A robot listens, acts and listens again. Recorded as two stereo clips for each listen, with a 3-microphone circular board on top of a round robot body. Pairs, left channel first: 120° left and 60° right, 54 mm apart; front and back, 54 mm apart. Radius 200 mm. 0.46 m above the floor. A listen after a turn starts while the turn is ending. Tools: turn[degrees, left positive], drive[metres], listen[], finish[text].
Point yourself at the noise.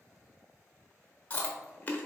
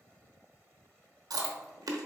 Thought: The chewing: 175° right.
Action: turn[-175]
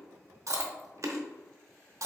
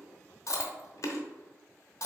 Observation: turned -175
Thought: The chewing is now 30° right.
Action: turn[-30]
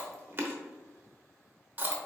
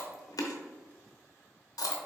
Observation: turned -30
Action: finish[Facing the chewing, under 1 m away.]